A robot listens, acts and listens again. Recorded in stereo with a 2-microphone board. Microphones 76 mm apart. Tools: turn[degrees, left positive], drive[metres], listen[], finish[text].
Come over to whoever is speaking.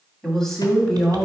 Action: turn[30]
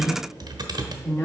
Thought: So it is at 145° left.
Action: turn[145]
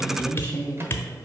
Thought: The woman speaking is now 35° left.
Action: turn[35]
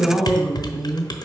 Action: drive[1.0]
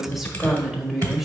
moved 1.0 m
Action: drive[1.0]
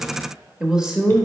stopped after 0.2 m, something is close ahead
Thought: The woman speaking is now 10° right.
Action: turn[-10]
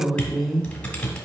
Action: finish[Arrived at the woman speaking, straight ahead.]